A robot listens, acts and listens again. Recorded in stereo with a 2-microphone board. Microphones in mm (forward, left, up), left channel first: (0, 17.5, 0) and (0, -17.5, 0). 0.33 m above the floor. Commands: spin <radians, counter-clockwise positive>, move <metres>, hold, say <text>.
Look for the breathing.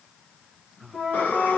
spin 1.22
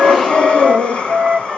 spin 0.52
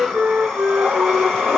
say Found it: breathing, straight ahead.